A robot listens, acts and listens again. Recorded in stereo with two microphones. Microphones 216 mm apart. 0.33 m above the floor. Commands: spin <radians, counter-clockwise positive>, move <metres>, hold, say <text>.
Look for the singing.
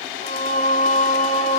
spin 0.52
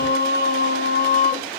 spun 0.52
spin 0.70
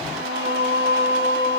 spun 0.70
spin 2.09
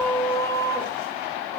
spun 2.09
spin 0.26
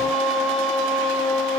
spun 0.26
say Facing the singing, 2 to 4 m away.